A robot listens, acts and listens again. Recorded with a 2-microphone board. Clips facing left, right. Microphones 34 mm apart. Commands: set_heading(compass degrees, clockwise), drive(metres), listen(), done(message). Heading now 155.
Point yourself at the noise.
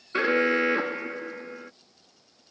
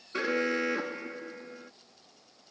set_heading(125)
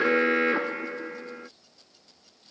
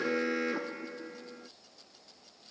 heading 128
set_heading(8)
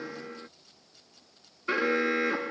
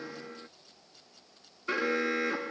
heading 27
set_heading(12)
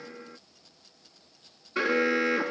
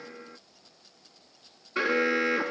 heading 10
done("Found it: an alarm, straight ahead.")